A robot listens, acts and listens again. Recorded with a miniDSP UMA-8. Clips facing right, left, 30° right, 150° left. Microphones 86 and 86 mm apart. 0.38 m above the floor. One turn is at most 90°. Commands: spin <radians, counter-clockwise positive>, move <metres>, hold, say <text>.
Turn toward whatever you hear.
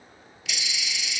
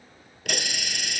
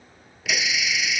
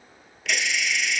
spin 0.96
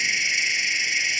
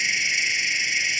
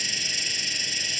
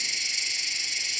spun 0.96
say Found it: a hiss, straight ahead.